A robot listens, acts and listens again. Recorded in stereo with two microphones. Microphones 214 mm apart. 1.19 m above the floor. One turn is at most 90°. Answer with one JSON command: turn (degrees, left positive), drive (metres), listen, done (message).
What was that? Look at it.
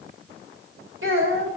{"turn": -70}
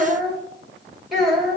{"done": "Facing the child speaking."}